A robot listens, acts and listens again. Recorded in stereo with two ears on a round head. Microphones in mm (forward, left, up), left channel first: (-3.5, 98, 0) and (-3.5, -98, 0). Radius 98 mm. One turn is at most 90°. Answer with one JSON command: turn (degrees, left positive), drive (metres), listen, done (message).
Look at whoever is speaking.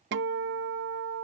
{"listen": true}
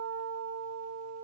{"listen": true}
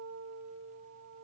{"done": "I can't make out anyone speaking to turn to."}